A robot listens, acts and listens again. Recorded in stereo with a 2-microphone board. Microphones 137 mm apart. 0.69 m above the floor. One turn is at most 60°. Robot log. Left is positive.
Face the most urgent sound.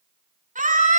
note: The scream: about 70° right or 110° right.
cmd yaw -60
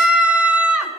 note: So it is at 10° right.
cmd yaw -10
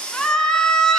end: Found it: a scream, straight ahead.